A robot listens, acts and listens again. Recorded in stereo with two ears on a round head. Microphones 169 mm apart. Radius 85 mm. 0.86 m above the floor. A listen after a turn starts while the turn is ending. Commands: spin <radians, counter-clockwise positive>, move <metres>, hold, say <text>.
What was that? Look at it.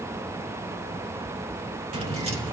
spin -0.52
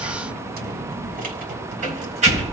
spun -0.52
spin -0.61
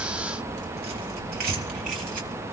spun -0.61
spin -2.27
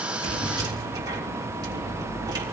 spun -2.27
spin -0.35
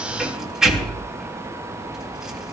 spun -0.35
say Found it: keys jangling, straight ahead.